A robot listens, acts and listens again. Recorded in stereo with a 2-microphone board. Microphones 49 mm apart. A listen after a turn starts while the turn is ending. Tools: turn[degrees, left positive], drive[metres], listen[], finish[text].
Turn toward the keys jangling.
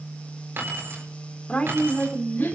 Thought: The keys jangling: about 55° right or 125° right.
Action: turn[-55]
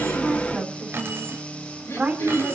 Action: listen[]
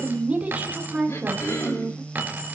Thought: So it is at 35° right.
Action: turn[-35]
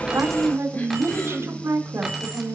Action: listen[]
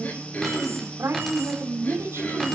Action: listen[]
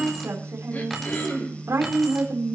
Action: finish[Facing where the keys jangling came from. I can't hear it now.]